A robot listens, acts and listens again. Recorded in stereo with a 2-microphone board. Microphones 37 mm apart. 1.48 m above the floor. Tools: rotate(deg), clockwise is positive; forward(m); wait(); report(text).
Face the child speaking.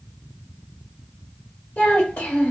rotate(-50)
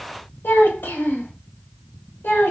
rotate(-80)
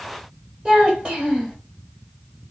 rotate(25)
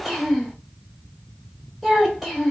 report("Facing the child speaking.")